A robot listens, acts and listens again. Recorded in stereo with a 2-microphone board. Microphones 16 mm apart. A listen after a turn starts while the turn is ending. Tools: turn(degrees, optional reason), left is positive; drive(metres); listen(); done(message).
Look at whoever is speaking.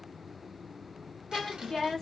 turn(degrees=40, reason="The woman speaking: about 40° left or 140° left.")
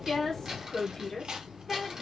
turn(degrees=30, reason="The woman speaking: about 30° left or 150° left.")
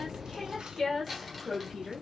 turn(degrees=45, reason="The woman speaking: about 45° left or 135° left.")
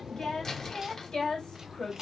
turn(degrees=70, reason="So it is at 70° left.")
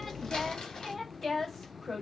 done("Facing the woman speaking, 2 to 4 m away.")